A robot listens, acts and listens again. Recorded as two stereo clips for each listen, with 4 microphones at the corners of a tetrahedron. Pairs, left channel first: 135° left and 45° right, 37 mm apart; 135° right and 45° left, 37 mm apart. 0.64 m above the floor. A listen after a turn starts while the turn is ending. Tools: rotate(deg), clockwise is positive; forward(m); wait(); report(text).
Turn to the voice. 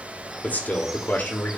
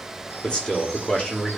rotate(-160)
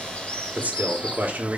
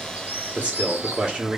rotate(10)
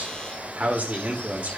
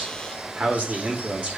report("Facing the man speaking, 1 to 2 m away.")